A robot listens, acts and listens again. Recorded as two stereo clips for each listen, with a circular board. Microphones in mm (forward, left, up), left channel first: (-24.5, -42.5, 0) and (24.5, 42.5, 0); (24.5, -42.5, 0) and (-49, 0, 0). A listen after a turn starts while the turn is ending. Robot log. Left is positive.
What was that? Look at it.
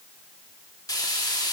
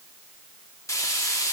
note: The frying: 75° right.
cmd yaw -75
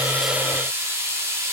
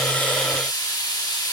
end: Facing the frying.